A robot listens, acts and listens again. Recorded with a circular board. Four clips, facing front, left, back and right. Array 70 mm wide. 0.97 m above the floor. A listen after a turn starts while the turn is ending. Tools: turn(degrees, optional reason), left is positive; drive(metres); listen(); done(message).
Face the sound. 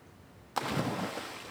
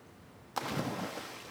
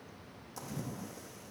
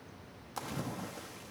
turn(degrees=20, reason="The splash: 20° left.")
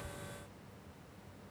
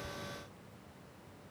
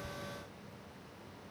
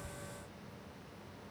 done("Facing where the splash came from. I can't hear it now.")